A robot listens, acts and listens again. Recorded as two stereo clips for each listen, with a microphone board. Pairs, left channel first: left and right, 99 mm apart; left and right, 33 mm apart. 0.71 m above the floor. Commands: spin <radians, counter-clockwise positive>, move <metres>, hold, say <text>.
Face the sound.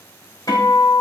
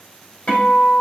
spin 0.61
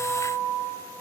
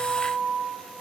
say Found it: a guitar, straight ahead.